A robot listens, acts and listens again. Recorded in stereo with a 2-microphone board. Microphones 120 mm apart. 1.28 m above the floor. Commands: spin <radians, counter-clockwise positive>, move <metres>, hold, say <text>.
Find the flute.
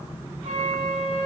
spin -1.13
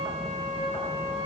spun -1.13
spin -0.79
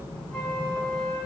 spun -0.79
spin 0.17
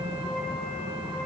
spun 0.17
hold
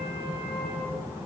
hold
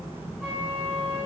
say Found it: a flute, straight ahead, 2 to 4 m away.